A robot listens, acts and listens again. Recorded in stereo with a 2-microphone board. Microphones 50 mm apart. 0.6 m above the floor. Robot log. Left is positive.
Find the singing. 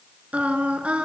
note: The singing: about 25° right or 155° right.
cmd yaw -25
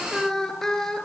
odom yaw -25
note: So it is at 10° left.
cmd yaw +10
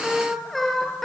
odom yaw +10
end: Facing the singing, over 4 m away.